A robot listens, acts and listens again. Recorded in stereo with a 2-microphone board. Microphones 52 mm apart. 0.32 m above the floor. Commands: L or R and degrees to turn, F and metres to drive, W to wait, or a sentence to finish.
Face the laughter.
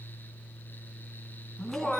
L30
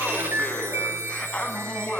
L15
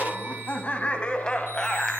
L30
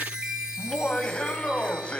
L160
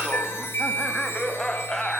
L15
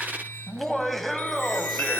Found it: laughter, straight ahead.